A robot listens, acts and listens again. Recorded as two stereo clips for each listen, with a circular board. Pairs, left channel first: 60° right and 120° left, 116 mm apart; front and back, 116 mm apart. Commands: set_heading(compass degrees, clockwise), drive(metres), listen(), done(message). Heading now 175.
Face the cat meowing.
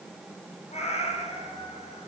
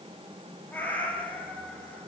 set_heading(255)
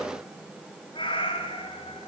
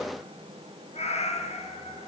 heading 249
set_heading(274)
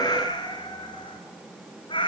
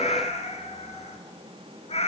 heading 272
set_heading(292)
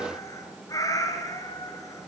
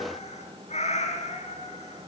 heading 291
done("Facing the cat meowing, 2 to 4 m away.")